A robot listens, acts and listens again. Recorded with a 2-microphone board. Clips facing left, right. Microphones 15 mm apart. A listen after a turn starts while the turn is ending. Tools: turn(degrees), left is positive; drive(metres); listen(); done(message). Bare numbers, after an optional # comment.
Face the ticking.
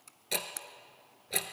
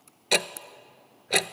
# The ticking: about 60° right or 120° right.
turn(-60)
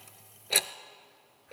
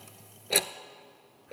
done("Facing the ticking.")